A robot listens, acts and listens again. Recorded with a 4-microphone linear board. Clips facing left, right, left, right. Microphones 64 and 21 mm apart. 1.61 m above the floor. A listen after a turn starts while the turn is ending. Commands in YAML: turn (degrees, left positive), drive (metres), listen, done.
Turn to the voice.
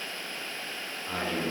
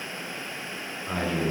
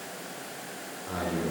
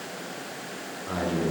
turn: -30
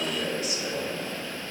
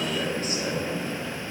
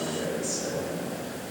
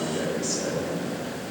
turn: -135
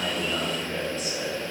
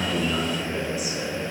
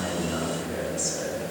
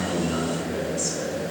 turn: -10
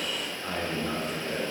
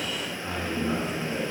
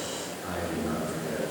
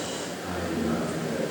done: "Found it: a man speaking, straight ahead, 2 to 4 m away."